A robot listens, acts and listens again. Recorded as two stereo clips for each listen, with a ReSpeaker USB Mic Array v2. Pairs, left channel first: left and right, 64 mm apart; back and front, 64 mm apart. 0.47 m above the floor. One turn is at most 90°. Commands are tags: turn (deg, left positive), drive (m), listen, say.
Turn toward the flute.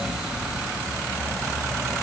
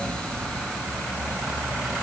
<listen/>
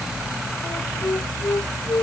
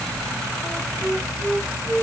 <turn deg="90"/>
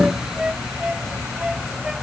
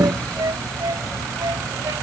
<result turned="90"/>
<turn deg="-10"/>
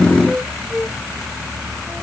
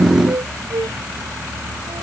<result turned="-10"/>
<say>Found it: a flute, straight ahead.</say>